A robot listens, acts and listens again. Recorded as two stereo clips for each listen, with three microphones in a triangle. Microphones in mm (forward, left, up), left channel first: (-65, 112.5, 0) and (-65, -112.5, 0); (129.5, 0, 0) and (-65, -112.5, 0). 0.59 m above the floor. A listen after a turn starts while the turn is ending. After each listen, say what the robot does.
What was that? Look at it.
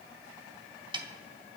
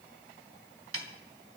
Turn 160° right.
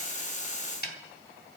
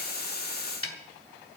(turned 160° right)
Turn 45° left.
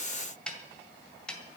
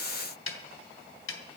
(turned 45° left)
Found it: a snare drum, straight ahead, 2 to 4 m away.